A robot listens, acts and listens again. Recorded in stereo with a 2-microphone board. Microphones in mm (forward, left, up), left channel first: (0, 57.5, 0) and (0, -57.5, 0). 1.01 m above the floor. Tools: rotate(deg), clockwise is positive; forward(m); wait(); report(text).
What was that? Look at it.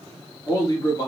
rotate(-35)
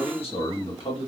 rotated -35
rotate(-130)
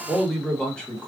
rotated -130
rotate(-10)
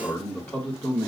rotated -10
rotate(-25)
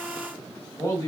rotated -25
rotate(-25)
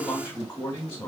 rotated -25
rotate(-20)
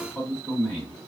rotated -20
report("Found it: a man speaking, straight ahead.")